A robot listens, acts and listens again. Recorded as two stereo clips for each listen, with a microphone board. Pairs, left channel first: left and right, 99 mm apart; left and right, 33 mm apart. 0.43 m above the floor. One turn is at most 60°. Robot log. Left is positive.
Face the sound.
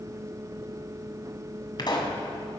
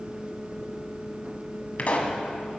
note: The pop: about 45° left or 135° left.
cmd yaw +45
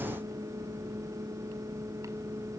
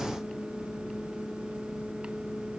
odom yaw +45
cmd idle
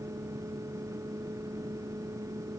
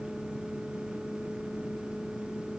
end: I heard a pop, but can't make it out now. It was about straight ahead or 90° left.